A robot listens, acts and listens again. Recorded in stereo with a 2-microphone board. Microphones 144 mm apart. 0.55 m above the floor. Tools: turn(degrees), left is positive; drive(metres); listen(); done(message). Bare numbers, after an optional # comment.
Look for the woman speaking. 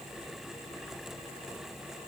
listen()
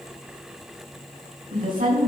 turn(-90)
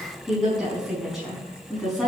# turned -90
done("Facing the woman speaking, over 4 m away.")